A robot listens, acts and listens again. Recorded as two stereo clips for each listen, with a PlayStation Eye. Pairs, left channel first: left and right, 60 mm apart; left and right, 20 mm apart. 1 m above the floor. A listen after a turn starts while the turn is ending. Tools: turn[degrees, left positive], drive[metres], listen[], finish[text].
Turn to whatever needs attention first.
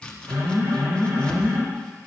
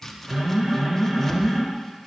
Thought: The alarm: about 70° right or 110° right.
Action: turn[-70]
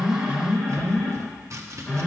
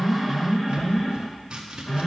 Action: finish[Found it: an alarm, straight ahead, over 4 m away.]